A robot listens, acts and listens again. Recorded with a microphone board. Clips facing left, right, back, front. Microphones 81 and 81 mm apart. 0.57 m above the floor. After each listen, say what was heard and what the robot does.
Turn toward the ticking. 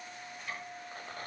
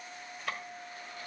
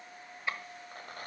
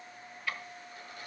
The ticking: 115° right. Turn 115° right.
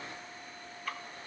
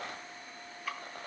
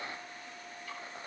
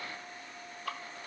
Facing the ticking, 1 to 2 m away.